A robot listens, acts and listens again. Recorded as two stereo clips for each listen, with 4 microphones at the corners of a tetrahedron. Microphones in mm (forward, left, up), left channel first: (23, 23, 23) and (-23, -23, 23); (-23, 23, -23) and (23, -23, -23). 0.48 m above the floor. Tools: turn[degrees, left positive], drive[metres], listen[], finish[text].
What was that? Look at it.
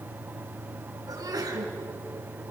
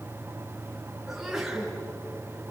Thought: The sneeze: 130° right.
Action: turn[-130]
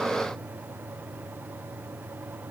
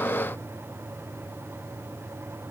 Action: finish[I heard a sneeze from this way, but can't make it out now.]